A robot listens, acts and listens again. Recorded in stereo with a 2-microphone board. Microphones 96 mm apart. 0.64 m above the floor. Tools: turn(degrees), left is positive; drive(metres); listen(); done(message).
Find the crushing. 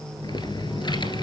listen()
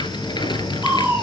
turn(degrees=-20)
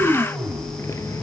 done("Facing the crushing.")